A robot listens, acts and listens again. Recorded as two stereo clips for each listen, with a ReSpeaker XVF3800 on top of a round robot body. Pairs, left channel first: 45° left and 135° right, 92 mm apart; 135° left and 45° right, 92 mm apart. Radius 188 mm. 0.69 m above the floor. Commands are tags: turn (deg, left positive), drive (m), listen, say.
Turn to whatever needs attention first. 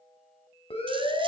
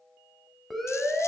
<turn deg="45"/>
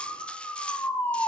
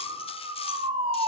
<turn deg="-25"/>
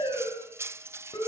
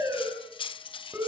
<turn deg="10"/>
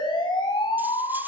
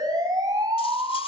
<say>Found it: a siren, straight ahead.</say>